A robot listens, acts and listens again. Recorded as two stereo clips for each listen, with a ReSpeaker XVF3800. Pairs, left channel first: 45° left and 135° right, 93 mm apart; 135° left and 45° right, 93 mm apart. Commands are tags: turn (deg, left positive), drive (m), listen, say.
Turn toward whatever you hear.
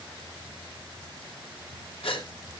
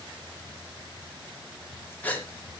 <turn deg="65"/>
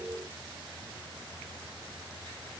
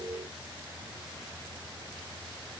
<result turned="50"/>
<turn deg="15"/>
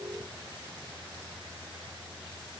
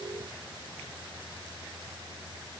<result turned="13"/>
<say>Facing where the gasp came from. I can't hear it now.</say>